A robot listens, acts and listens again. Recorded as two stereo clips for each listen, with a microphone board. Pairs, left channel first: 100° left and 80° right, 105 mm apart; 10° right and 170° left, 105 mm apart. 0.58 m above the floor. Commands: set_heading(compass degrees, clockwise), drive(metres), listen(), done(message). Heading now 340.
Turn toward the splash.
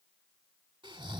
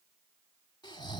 listen()
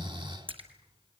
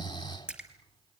set_heading(90)
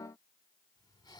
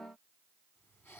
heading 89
done("I heard a splash from this way, but can't make it out now.")